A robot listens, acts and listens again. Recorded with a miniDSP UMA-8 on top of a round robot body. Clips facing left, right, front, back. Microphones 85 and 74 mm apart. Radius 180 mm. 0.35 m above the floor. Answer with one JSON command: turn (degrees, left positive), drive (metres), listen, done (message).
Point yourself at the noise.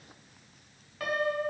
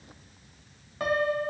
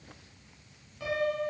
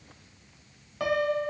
{"turn": -155}
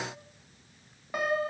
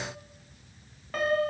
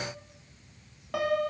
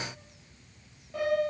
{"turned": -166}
{"turn": 15}
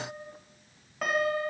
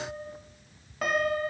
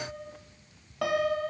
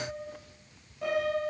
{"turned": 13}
{"done": "Facing the piano."}